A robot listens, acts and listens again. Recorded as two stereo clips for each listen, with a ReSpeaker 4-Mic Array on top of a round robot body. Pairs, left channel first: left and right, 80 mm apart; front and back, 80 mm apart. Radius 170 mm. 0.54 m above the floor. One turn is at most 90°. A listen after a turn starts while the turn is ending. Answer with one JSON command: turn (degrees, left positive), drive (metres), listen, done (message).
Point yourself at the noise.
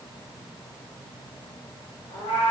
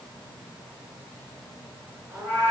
{"turn": 90}
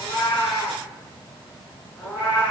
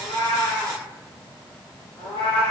{"turn": 15}
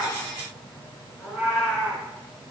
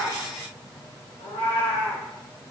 {"done": "Found it: a cat meowing, straight ahead, 2 to 4 m away."}